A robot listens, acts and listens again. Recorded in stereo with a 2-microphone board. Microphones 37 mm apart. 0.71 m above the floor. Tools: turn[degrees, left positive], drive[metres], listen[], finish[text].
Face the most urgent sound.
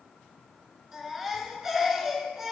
Action: turn[-30]
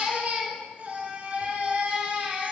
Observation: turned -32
Thought: So it is at 135° right.
Action: turn[-135]
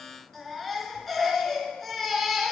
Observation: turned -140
Action: finish[Facing the baby crying, 2 to 4 m away.]